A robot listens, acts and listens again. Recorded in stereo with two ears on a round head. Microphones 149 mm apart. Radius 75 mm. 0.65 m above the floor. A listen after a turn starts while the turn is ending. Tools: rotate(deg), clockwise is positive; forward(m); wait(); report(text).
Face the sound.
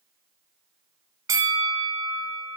rotate(20)
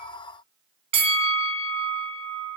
rotate(140)
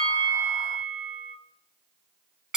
report("Found it: a bell, straight ahead.")